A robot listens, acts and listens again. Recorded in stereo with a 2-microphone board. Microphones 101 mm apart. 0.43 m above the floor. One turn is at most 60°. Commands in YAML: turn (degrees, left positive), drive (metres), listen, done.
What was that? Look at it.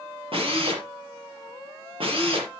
turn: -60
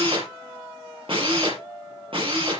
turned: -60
turn: -60
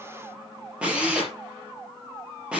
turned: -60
turn: -10
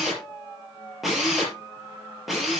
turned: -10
done: "Found it: a drill, straight ahead, over 4 m away."